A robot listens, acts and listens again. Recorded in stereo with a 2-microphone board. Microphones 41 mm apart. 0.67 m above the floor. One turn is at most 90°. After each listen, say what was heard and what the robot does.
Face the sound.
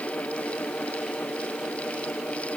Keep listening.
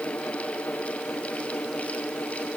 Keep listening.
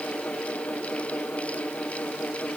I can't make out anything to turn to.